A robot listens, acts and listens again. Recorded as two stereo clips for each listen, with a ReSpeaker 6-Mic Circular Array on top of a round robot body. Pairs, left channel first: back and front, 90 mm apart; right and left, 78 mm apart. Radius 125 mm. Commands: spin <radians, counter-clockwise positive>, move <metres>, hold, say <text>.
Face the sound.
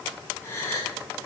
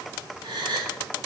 spin 2.01
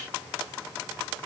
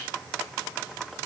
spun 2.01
say Facing where the gasp came from. I can't hear it now.